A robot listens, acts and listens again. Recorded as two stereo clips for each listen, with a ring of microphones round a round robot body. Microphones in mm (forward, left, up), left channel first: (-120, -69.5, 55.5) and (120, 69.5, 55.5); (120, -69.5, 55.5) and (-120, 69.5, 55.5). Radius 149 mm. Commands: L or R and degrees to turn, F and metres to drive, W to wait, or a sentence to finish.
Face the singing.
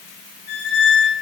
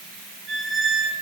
W
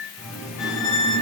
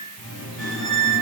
R60
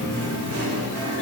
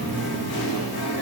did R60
R10
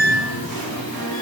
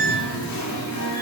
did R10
Facing the singing, 1 to 2 m away.